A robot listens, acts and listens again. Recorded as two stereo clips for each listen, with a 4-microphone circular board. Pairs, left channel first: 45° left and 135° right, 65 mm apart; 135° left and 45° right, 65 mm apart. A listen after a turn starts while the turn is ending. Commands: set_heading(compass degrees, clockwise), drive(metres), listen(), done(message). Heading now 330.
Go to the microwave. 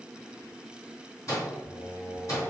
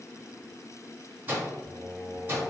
set_heading(320)
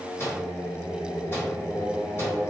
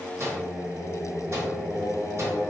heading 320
drive(1.0)
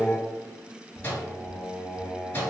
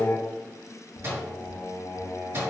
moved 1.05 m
set_heading(335)
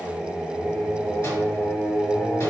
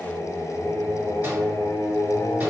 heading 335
listen()
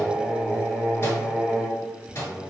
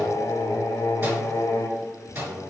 drive(1.0)
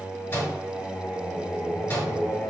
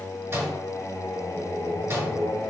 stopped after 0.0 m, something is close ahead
set_heading(350)
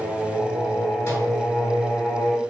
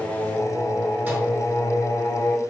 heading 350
listen()
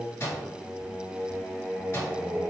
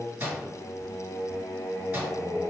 done("I am next to the microwave.")